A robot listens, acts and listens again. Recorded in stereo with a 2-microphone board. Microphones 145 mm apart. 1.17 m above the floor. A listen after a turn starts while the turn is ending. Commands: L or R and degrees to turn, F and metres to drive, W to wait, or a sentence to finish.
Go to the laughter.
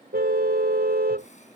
W
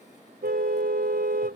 W
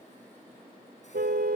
I can't make out laughter to turn to.